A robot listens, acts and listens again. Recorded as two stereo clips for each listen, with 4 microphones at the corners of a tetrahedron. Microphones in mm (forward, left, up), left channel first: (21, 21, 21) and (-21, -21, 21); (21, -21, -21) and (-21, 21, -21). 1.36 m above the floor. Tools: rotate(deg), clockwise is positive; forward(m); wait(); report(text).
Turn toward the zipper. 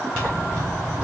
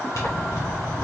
rotate(30)
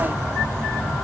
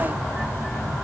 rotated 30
rotate(-10)
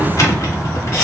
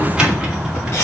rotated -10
report("Facing the zipper.")